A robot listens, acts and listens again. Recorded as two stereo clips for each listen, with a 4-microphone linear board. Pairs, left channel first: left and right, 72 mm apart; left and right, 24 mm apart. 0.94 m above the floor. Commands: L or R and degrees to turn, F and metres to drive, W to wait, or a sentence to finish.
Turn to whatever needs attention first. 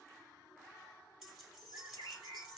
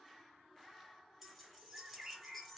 W
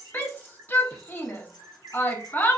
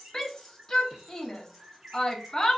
L25
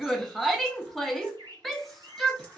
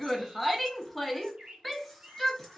Facing the shout, under 1 m away.